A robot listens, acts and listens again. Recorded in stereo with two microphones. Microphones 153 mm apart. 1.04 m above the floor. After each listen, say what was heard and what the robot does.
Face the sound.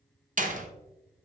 The door slam: about 55° right or 125° right. Turn 55° right.
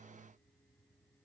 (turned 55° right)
Keep listening.
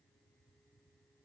I heard a door slam, but can't make it out now. It was about straight ahead or 70° right.